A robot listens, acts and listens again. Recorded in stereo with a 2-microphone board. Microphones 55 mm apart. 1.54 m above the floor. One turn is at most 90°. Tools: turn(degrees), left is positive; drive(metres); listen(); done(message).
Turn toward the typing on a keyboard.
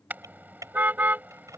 turn(degrees=-90)
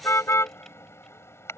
listen()
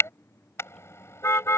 listen()
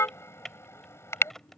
done("Found it: typing on a keyboard, straight ahead.")